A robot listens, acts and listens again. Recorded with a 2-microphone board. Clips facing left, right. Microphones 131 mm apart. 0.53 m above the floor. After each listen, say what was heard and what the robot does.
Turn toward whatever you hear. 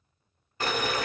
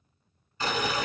The boiling: about 65° left or 115° left. Turn 65° left.
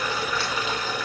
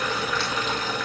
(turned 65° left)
Facing the boiling.